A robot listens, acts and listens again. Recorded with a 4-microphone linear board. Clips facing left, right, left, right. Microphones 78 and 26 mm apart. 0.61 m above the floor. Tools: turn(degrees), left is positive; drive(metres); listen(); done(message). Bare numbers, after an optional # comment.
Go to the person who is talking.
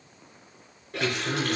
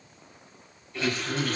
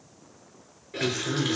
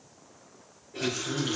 # The man speaking: about 55° left or 125° left.
turn(55)
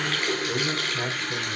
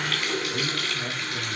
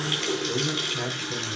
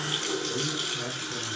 # So it is at 70° left.
turn(70)
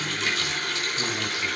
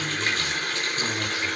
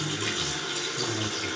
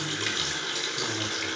drive(1.0)
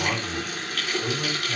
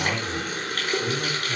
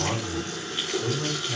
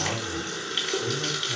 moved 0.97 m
drive(1.0)
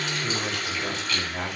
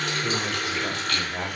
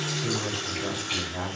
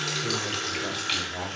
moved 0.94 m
# The man speaking is now 10° right.
turn(-10)
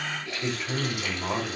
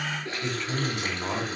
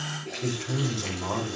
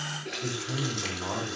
# The man speaking is now 10° left.
turn(10)
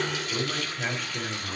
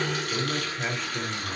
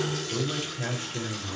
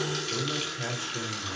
drive(1.0)
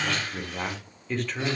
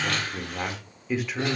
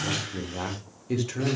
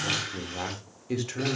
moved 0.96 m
# The man speaking is now 10° right.
turn(-10)
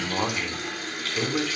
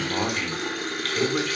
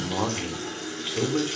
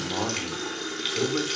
drive(1.0)
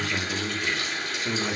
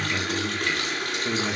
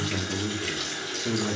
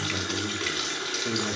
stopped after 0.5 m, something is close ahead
done("Arrived at the man speaking, straight ahead.")